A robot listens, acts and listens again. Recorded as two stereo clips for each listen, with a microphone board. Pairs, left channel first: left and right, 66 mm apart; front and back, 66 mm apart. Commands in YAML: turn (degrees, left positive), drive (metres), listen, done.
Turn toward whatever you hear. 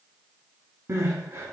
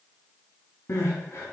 turn: -55
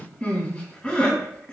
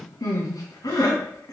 turn: 10
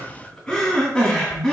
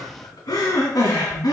done: "Facing the crying."